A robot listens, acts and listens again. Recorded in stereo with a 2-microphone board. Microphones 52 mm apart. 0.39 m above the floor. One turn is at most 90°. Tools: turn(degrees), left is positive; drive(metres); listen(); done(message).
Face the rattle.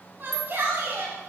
turn(degrees=45)
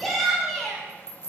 turn(degrees=85)
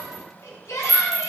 done("Facing the rattle, 1 to 2 m away.")